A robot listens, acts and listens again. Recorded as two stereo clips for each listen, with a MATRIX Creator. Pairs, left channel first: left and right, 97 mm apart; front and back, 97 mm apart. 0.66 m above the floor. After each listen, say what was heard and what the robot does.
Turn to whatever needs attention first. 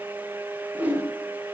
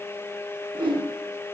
Keep listening.
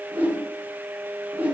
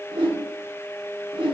Keep listening.
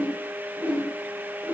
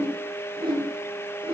I can't make out anything urgent to turn to.